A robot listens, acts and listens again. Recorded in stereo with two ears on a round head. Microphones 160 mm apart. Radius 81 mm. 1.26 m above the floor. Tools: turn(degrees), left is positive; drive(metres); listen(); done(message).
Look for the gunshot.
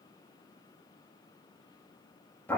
listen()
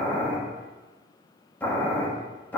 listen()
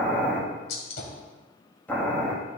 turn(degrees=60)
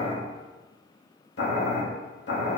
listen()
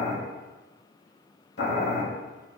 done("I heard a gunshot, but can't make it out now. It was about straight ahead or 60° left.")